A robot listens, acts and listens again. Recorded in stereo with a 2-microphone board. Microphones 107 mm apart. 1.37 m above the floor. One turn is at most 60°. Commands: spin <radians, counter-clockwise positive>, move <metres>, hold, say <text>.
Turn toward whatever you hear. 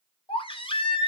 spin 0.96
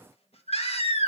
spin 1.05
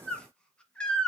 spin 0.17
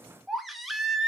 say Found it: a baby crying, straight ahead.